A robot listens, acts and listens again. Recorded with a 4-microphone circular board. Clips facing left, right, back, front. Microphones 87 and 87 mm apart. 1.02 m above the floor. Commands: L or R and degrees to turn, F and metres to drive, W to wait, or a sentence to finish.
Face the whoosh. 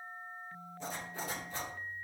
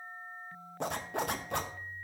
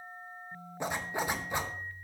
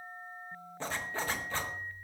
W
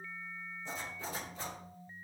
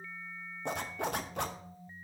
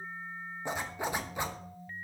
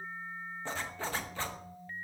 W
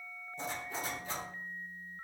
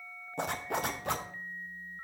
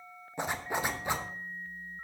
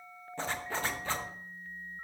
I can't make out a whoosh, only a zipper.